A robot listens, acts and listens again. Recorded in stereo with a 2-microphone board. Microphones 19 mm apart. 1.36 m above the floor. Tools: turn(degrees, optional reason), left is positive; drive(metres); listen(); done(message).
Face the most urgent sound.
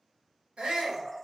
turn(degrees=-90)
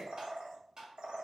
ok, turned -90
listen()
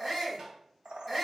done("Found it: a shout, straight ahead.")